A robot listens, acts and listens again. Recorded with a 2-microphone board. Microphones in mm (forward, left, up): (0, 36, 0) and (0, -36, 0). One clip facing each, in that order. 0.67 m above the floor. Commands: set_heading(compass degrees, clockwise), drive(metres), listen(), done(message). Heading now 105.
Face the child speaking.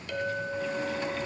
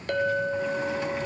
listen()
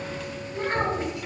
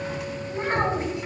set_heading(130)
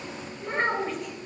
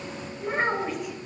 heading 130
done("Found it: a child speaking, straight ahead.")